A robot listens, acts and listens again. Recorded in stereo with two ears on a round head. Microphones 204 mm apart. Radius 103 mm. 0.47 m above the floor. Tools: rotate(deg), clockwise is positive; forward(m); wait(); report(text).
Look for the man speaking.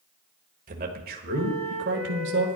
rotate(60)
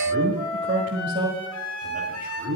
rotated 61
rotate(45)
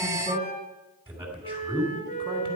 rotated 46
rotate(15)
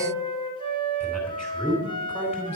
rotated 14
report("Found it: a man speaking, straight ahead, 2 to 4 m away.")